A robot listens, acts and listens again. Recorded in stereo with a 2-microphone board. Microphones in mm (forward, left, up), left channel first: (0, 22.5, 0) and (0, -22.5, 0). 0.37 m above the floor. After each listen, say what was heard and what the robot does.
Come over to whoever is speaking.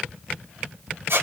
Keep listening.
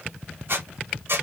Keep listening.
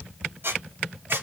I can't make out anyone speaking to turn to.